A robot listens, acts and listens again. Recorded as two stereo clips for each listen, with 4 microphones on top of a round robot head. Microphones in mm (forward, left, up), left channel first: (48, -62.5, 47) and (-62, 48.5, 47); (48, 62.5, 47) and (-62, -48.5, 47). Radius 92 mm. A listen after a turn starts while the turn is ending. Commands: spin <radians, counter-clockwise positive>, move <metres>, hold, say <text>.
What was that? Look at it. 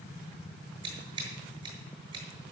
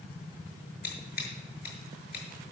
spin 1.22
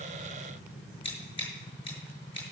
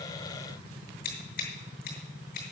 spin 0.17
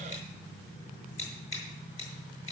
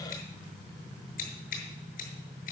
say Facing the scissors.